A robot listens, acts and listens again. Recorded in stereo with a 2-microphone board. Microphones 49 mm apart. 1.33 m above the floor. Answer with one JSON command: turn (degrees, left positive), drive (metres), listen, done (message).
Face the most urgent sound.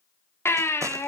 {"turn": 60}
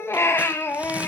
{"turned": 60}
{"turn": 55}
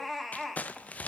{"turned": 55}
{"done": "Facing the baby crying, 1 to 2 m away."}